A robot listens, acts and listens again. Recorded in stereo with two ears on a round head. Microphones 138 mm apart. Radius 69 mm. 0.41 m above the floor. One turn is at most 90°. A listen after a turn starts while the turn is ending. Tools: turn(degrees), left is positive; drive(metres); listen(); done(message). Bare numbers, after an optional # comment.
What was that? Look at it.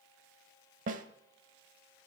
# The snare drum: about 50° right or 130° right.
turn(-50)
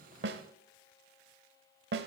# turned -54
# So it is at 75° right.
turn(-75)
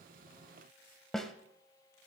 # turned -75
done("Facing the snare drum, under 1 m away.")